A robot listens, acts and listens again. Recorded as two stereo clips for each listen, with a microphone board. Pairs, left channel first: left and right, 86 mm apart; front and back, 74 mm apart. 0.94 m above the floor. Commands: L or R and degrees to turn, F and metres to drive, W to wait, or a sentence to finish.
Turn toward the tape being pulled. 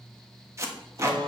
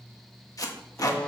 R35
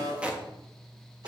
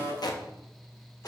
R15
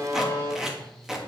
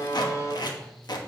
Facing the tape being pulled, 1 to 2 m away.